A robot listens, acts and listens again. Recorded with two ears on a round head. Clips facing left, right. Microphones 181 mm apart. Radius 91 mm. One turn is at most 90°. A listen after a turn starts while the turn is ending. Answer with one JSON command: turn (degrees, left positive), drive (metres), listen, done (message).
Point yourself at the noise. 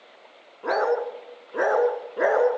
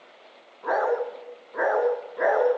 {"turn": 40}
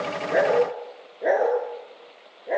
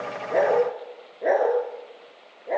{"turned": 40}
{"done": "Facing the dog barking."}